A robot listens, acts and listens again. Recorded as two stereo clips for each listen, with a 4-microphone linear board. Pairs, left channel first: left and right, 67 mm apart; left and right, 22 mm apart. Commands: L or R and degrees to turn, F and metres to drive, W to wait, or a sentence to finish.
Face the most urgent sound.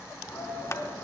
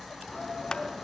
L50
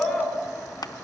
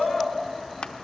L10
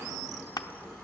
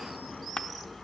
W
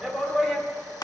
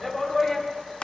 Found it: a shout, straight ahead.